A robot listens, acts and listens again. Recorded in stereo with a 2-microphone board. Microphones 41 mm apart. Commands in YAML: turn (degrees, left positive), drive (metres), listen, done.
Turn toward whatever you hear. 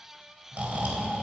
turn: -40
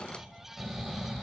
done: "Found it: snoring, straight ahead."